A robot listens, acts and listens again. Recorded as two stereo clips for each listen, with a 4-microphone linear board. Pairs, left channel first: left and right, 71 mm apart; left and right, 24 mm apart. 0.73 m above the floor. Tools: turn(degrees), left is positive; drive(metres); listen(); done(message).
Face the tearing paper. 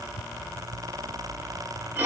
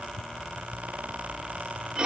listen()
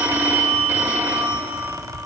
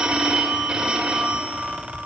listen()
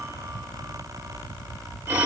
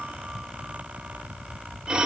done("I can't make out tearing paper, only a phone ringing.")